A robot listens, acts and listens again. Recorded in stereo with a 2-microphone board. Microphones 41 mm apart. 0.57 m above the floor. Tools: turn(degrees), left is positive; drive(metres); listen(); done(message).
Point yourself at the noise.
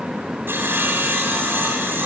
turn(degrees=-60)
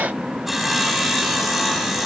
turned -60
done("Facing the sawing.")